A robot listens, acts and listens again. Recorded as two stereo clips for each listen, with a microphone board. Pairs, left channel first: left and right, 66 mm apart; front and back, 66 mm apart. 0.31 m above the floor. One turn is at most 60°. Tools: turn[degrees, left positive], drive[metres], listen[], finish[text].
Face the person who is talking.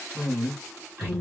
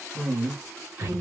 Thought: The woman speaking: 135° right.
Action: turn[-60]
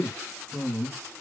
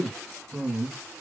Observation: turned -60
Thought: The woman speaking is now 95° right.
Action: turn[-60]
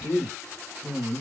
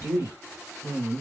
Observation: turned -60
Thought: The woman speaking is now 20° right.
Action: turn[-20]
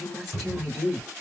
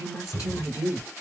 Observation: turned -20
Action: finish[Facing the woman speaking, 1 to 2 m away.]